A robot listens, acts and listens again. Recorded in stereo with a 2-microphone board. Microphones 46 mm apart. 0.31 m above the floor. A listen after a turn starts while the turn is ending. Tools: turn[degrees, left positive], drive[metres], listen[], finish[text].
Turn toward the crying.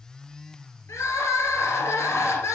Action: turn[90]
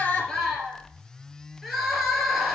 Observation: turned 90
Action: finish[Facing the crying, 2 to 4 m away.]